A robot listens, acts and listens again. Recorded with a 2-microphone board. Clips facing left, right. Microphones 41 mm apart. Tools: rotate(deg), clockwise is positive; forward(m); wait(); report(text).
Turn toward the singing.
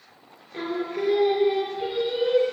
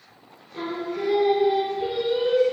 rotate(-25)
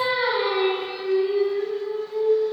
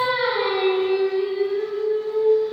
rotate(20)
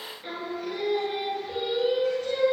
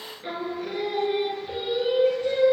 rotate(15)
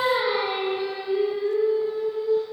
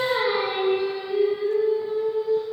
report("Facing the singing.")